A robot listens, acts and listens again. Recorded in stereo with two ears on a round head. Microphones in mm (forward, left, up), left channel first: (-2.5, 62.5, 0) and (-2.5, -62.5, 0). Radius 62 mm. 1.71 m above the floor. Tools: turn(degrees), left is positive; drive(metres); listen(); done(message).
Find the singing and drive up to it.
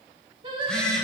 turn(degrees=-35)
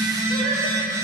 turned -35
listen()
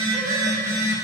listen()
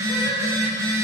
done("I heard singing, but can't make it out now. It was about straight ahead or 110° right. I did not reach it.")